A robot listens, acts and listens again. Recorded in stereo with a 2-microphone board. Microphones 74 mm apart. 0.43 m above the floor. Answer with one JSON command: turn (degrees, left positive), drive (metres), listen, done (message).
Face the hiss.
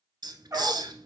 {"turn": -75}
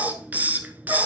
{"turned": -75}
{"turn": -25}
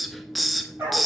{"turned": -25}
{"done": "Found it: a hiss, straight ahead, under 1 m away."}